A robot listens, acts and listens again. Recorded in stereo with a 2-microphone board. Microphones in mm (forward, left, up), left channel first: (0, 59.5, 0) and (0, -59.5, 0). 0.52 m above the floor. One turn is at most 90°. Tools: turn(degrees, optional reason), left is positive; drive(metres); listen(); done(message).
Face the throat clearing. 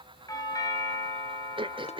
turn(degrees=-40, reason="The throat clearing: about 40° right or 140° right.")
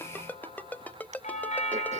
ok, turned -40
listen()
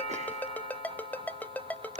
listen()
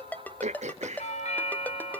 turn(degrees=-90, reason="So it is at 95° right.")
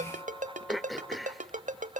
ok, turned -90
done("Found it: throat clearing, straight ahead, 1 to 2 m away.")